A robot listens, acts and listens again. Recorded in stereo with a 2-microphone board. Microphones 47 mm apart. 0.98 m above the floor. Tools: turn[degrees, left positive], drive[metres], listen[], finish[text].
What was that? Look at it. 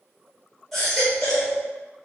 Action: turn[30]
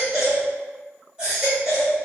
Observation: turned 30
Thought: So it is at 20° right.
Action: turn[-20]
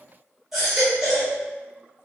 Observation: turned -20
Thought: The baby crying is now 10° right.
Action: turn[-10]
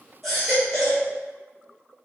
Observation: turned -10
Action: finish[Found it: a baby crying, straight ahead.]